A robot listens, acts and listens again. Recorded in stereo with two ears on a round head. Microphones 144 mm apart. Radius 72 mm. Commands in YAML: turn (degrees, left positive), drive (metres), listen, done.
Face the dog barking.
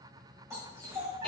turn: -25
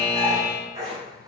turn: -40
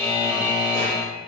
listen: true
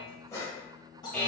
turn: 30
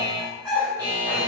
done: "Found it: a dog barking, straight ahead, 2 to 4 m away."